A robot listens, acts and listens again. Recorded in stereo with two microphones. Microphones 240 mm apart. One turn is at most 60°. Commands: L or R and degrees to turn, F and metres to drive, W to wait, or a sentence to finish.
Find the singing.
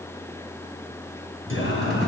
L60
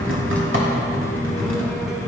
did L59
W
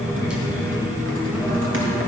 R10
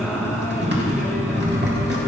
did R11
Found it: singing, straight ahead.